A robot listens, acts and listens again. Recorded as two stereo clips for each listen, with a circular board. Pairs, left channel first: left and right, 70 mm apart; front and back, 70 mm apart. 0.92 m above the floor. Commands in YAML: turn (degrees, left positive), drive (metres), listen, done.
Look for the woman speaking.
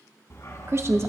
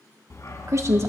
turn: -135
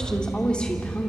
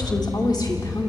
listen: true
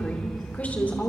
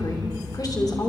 listen: true
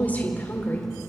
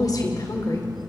turn: 30
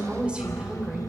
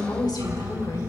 turn: -15
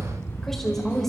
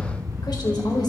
listen: true
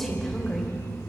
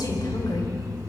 listen: true
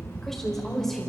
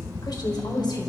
done: "Found it: a woman speaking, straight ahead."